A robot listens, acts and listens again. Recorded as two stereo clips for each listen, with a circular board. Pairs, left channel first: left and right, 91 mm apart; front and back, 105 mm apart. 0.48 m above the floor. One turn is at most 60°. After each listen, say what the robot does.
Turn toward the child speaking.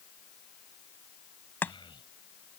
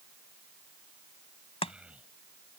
Turn 60° left.
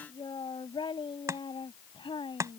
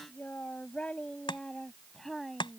Turn 60° left.
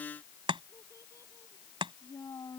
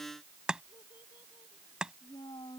Turn 40° left.
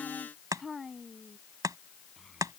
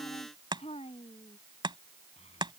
Found it: a child speaking, straight ahead.